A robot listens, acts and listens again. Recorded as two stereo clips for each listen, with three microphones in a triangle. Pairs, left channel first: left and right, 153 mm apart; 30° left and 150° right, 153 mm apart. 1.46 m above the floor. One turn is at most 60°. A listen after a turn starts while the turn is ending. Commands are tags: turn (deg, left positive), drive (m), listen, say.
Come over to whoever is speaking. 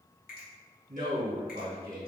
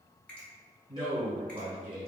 <turn deg="-60"/>
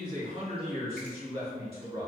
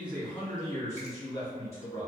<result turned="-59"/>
<turn deg="-40"/>
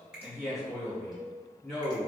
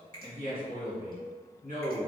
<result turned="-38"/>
<drive m="1.0"/>
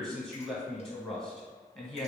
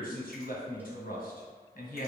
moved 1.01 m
<drive m="1.0"/>
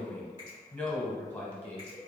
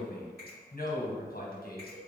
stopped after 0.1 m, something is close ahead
<turn deg="10"/>
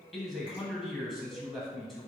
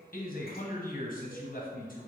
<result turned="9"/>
<say>I am next to the man speaking.</say>